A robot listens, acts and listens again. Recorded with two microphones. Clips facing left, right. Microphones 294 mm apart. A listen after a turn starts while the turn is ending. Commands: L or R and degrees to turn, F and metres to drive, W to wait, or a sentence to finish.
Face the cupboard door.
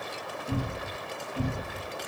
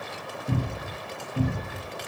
R20
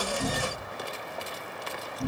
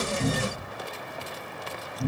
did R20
Facing the cupboard door.